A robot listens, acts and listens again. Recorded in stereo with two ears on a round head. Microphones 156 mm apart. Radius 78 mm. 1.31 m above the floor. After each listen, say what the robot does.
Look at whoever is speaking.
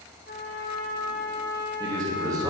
Turn 20° right.
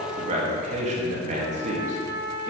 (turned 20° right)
Turn 135° right.
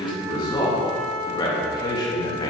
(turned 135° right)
Turn 25° left.
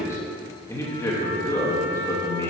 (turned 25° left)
Turn 15° left.
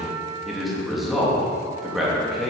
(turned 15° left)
Facing the man speaking, 2 to 4 m away.